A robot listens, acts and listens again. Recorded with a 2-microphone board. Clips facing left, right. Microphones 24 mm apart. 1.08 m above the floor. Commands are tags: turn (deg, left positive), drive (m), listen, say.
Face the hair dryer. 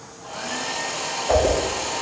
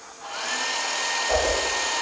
<turn deg="-45"/>
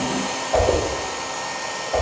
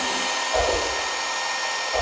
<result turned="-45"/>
<turn deg="-85"/>
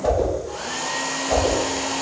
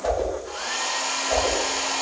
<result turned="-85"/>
<turn deg="-20"/>
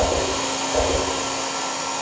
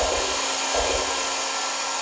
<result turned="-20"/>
<say>Facing the hair dryer, under 1 m away.</say>